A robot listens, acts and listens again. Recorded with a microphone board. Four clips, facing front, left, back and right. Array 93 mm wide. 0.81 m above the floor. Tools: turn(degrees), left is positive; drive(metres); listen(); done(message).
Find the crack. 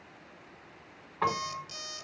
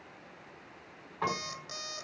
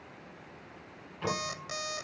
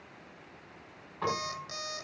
listen()
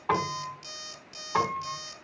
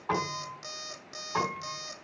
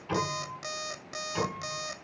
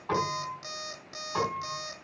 listen()
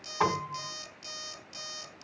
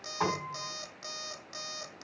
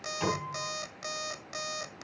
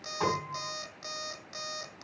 done("I can't make out a crack to turn to.")